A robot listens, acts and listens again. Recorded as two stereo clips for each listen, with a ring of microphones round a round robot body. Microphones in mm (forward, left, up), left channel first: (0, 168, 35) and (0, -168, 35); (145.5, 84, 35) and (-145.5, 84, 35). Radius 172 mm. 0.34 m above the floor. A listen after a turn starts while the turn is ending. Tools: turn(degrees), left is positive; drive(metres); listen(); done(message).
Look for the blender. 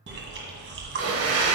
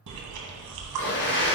turn(degrees=-50)
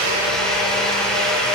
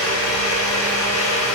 done("Found it: a blender, straight ahead, 1 to 2 m away.")